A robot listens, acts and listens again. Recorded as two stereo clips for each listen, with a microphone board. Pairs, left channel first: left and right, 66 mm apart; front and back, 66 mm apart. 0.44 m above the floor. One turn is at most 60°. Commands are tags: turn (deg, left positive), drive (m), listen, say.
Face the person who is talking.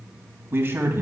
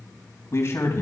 <turn deg="-45"/>
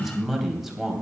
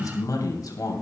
<say>Facing the man speaking, 2 to 4 m away.</say>